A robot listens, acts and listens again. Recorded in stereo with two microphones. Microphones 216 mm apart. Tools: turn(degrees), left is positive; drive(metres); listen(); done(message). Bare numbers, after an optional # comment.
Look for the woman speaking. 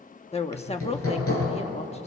# The woman speaking: about 25° left or 155° left.
turn(25)
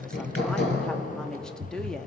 done("Found it: a woman speaking, straight ahead.")